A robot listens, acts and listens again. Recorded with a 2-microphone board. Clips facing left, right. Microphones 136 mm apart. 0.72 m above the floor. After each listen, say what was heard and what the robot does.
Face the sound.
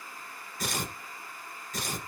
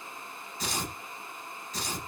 The tearing paper: about 50° left or 130° left. Turn 50° left.
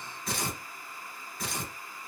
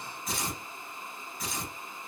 So it is at 75° left. Turn 75° left.
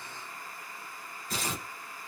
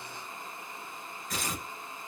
The tearing paper is now 35° left. Turn 35° left.
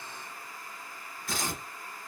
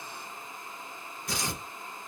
The tearing paper is now 20° right. Turn 20° right.
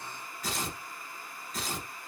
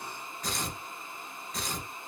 Found it: tearing paper, straight ahead.